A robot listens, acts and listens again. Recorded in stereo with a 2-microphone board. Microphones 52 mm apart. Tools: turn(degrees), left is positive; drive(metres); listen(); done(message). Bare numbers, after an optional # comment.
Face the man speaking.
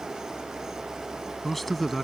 turn(30)
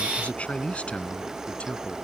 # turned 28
# So it is at 155° left.
turn(155)
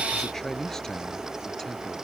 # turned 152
# The man speaking is now 10° left.
turn(10)
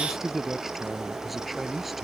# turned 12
done("Facing the man speaking.")